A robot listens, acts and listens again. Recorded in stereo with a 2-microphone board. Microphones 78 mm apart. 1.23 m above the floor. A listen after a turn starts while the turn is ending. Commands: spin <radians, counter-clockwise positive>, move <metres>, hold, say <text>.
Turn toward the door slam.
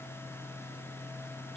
hold
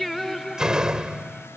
spin -0.52
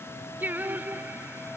hold
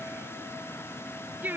say I heard a door slam, but can't make it out now. It was about 20° left or 140° right.